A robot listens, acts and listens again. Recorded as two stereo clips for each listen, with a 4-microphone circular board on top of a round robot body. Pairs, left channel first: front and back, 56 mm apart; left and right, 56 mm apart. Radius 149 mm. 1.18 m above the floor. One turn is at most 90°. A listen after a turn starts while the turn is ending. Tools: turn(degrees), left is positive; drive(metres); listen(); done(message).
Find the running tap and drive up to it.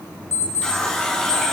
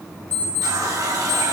turn(degrees=-70)
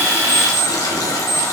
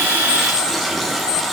drive(metres=1.0)
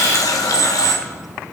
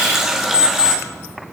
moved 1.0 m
drive(metres=1.0)
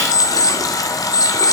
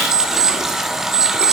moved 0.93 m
drive(metres=1.0)
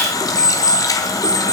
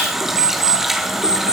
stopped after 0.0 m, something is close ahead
done("I am next to the running tap.")